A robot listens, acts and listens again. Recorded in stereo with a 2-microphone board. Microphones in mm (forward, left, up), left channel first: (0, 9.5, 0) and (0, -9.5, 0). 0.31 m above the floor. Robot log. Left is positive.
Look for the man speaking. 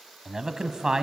note: The man speaking: about 40° right or 140° right.
cmd yaw -40
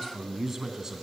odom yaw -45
note: So it is at 25° right.
cmd yaw -25
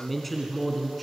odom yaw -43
end: Facing the man speaking, 2 to 4 m away.